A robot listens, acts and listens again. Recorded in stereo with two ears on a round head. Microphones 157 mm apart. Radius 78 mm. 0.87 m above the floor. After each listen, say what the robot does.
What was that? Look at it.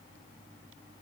Keep listening.
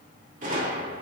Turn 50° right.
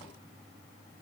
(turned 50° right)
Keep listening.
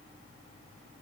I heard a gunshot, but can't make it out now. It was about straight ahead or 80° right.